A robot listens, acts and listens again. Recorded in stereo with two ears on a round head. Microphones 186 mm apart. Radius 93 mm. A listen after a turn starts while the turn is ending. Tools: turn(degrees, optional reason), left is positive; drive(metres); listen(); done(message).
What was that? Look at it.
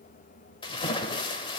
turn(degrees=25, reason="The splash: about 25° left or 155° left.")
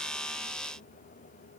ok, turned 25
listen()
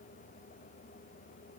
done("I heard a splash, but can't make it out now. It was about straight ahead or 130° left.")